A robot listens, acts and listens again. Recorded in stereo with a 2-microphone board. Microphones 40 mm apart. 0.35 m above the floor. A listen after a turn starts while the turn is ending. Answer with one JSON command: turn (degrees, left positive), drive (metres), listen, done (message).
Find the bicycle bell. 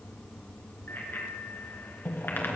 {"turn": 65}
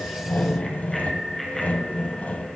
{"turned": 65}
{"done": "Found it: a bicycle bell, straight ahead."}